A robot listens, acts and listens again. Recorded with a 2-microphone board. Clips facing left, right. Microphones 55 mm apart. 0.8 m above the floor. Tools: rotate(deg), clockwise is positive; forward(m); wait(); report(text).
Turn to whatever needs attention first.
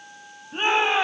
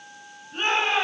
rotate(-20)
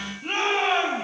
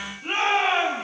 report("Facing the shout.")